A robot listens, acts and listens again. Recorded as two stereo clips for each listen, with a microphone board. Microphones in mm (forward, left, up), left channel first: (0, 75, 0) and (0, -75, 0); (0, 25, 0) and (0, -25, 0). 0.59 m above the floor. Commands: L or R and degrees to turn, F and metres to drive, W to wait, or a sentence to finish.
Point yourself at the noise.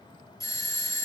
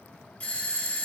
L25
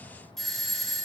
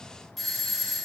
Found it: a doorbell, straight ahead, 1 to 2 m away.